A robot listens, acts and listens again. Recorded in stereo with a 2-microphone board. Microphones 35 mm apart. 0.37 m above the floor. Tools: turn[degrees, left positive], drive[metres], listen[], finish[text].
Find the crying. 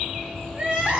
Thought: The crying: about 25° right or 155° right.
Action: turn[-25]
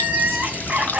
Thought: So it is at 130° right.
Action: turn[-130]
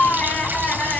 Thought: The crying is now 50° left.
Action: turn[50]
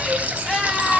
Action: finish[Facing the crying, 2 to 4 m away.]